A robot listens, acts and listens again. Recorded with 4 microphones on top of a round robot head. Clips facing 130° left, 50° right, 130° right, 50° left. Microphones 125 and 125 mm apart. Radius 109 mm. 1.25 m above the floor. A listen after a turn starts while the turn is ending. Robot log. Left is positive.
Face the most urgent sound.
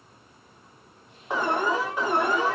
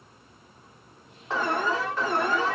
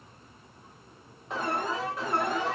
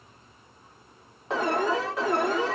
note: The alarm: 55° left.
cmd yaw +55
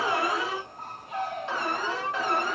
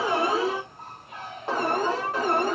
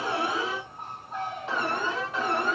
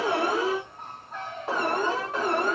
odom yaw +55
end: Found it: an alarm, straight ahead, 1 to 2 m away.